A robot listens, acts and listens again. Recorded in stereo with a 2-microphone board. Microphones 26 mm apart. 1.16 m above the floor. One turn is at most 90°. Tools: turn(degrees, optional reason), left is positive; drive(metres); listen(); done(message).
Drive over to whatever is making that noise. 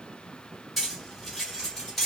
turn(degrees=30)
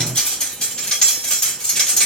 turn(degrees=90, reason="So it is at 150° left.")
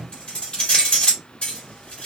turn(degrees=70, reason="The cutlery clinking is now 70° left.")
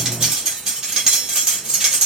turn(degrees=-25, reason="The cutlery clinking is now 25° right.")
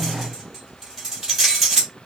drive(metres=1.0)
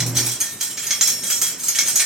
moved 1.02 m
turn(degrees=-15, reason="The cutlery clinking is now 15° right.")
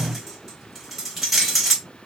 drive(metres=1.0)
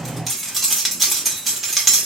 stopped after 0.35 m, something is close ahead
done("I am next to the cutlery clinking.")